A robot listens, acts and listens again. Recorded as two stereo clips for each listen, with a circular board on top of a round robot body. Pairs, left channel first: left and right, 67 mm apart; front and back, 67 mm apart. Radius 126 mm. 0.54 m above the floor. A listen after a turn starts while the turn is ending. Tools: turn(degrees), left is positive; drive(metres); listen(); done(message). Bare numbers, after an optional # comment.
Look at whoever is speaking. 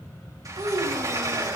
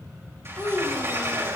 # The child speaking: 65° right.
turn(-65)
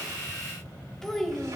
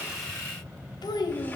done("Facing the child speaking.")